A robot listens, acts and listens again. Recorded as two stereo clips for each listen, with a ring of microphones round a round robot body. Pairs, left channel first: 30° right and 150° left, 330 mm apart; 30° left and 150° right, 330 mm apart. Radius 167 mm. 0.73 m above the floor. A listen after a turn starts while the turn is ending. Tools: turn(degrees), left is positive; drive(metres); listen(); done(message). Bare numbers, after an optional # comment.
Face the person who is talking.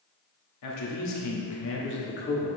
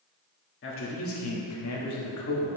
# The man speaking: 30° left.
turn(30)
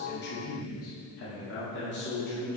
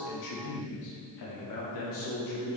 # The man speaking is now 30° left.
turn(30)
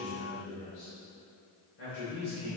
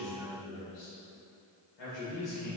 # The man speaking is now 25° left.
turn(25)
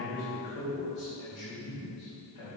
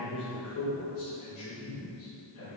# The man speaking is now 15° right.
turn(-15)
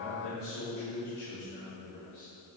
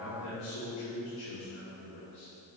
done("Facing the man speaking, 2 to 4 m away.")